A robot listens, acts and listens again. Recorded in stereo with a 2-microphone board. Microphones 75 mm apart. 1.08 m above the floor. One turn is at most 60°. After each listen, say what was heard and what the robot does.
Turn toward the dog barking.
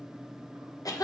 Keep listening.
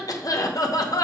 Keep listening.
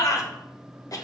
I can't make out a dog barking to turn to.